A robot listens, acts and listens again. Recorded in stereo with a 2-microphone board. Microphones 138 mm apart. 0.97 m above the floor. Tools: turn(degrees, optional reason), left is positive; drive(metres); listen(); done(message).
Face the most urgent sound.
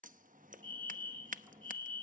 turn(degrees=-40, reason="The fire alarm: about 40° right or 140° right.")
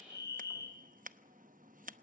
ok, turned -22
turn(degrees=-30, reason="So it is at 30° right.")
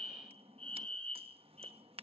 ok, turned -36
turn(degrees=10, reason="The fire alarm is now 10° left.")
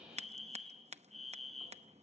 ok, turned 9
done("Facing the fire alarm, 2 to 4 m away.")